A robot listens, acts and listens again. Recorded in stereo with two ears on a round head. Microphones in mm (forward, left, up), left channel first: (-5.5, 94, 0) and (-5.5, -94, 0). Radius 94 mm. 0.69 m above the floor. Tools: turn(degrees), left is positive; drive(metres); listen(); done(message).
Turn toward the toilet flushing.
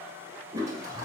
turn(degrees=-20)
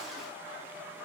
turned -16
done("Found it: a toilet flushing, straight ahead, 1 to 2 m away.")